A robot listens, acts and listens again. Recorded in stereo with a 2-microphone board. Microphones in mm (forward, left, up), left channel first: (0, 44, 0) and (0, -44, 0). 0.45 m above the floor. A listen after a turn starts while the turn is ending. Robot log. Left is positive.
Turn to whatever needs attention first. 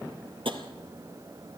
cmd idle
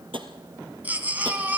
note: The baby crying: about 20° right or 160° right.
cmd yaw -20
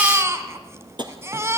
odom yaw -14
note: So it is at 150° right.
cmd yaw -150
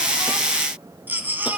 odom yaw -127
note: The baby crying is now 20° right.
cmd yaw -20
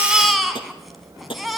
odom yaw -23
end: Facing the baby crying, 2 to 4 m away.